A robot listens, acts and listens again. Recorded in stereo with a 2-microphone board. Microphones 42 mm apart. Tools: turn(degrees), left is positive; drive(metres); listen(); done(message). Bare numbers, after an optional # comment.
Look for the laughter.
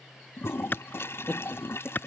# The laughter: about 40° left or 140° left.
turn(40)
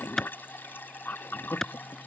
# So it is at 100° left.
turn(100)
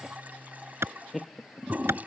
done("Facing the laughter.")